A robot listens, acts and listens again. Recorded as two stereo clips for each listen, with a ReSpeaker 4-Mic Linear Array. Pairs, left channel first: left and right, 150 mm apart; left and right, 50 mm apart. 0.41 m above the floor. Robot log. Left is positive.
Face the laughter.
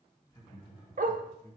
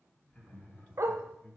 note: The laughter: about 30° left or 150° left.
cmd yaw +30
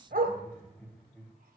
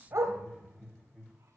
end: Facing the laughter, 2 to 4 m away.